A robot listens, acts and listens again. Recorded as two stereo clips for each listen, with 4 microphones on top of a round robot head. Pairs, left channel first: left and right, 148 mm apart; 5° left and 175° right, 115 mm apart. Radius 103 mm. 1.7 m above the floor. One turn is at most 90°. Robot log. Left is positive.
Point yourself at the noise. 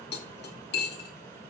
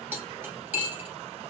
note: The cutlery clinking: 115° left.
cmd yaw +90
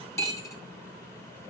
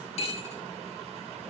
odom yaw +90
note: The cutlery clinking is now 25° left.
cmd yaw +25
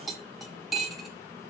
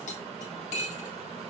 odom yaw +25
end: Found it: cutlery clinking, straight ahead.